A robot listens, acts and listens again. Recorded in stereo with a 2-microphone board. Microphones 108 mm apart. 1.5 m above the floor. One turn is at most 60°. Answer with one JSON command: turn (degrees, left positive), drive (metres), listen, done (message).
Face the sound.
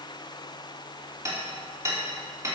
{"turn": -30}
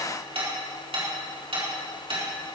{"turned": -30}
{"turn": -60}
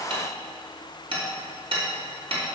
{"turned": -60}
{"turn": -60}
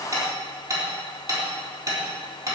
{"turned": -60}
{"turn": -35}
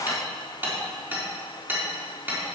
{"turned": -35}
{"turn": -20}
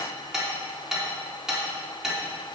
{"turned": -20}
{"done": "Facing the hammering."}